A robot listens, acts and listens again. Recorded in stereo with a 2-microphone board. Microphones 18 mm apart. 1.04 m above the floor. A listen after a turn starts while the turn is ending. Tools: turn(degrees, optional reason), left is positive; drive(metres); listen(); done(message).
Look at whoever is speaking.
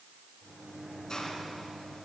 listen()
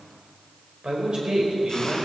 turn(degrees=-55, reason="The man speaking: about 55° right or 125° right.")
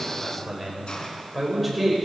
done("Facing the man speaking.")